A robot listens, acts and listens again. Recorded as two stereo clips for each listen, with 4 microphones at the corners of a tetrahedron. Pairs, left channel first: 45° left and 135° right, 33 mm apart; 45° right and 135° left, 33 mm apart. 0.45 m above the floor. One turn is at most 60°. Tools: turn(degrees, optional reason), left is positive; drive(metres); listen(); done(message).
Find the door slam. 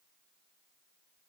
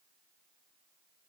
listen()
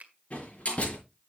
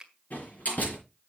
done("Found it: a door slam, straight ahead, over 4 m away.")